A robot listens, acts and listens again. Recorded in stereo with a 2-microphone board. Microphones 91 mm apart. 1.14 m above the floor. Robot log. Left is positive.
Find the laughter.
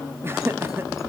note: The laughter: about 30° right or 150° right.
cmd yaw -30
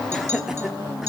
end: Facing the laughter.